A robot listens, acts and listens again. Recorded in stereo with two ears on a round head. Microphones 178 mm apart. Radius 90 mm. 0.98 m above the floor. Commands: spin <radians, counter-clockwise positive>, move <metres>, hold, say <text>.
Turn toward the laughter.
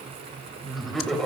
spin 0.52
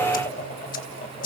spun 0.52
spin 2.44
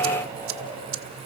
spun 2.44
spin -0.26
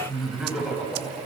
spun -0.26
say Found it: laughter, straight ahead, over 4 m away.